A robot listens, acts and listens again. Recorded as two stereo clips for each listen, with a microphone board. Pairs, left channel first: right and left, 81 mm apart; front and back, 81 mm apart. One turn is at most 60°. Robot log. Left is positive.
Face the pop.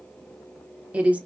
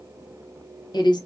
cmd idle
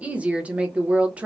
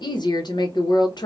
cmd idle
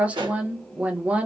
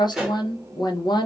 note: The pop: 95° left.
cmd yaw +60
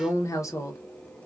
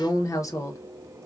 note: Nothing new. It was at 35° left.
cmd yaw +35
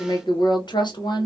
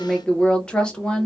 end: Facing where the pop came from. I can't hear it now.